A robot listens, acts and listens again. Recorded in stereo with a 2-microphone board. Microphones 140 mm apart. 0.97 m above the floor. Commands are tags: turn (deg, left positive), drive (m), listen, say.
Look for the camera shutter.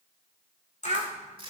<turn deg="60"/>
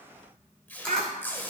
<listen/>
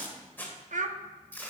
<listen/>
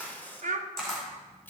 <say>Facing the camera shutter.</say>